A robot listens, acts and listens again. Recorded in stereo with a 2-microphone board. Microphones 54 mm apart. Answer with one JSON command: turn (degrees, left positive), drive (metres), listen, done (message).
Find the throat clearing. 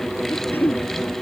{"turn": 35}
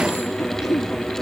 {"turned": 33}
{"turn": 110}
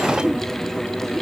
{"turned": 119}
{"turn": -10}
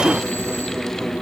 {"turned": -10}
{"listen": true}
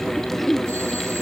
{"done": "Facing the throat clearing."}